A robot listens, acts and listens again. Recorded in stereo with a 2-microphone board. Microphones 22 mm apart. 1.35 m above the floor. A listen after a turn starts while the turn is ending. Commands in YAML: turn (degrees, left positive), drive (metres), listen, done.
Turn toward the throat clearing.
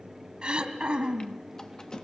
turn: -45
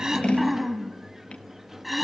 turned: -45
done: "Facing the throat clearing, 2 to 4 m away."